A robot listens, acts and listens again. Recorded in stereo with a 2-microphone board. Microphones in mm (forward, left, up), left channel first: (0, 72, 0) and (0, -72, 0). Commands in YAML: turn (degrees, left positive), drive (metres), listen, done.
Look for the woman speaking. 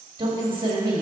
turn: -30
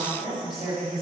done: "Facing the woman speaking, 2 to 4 m away."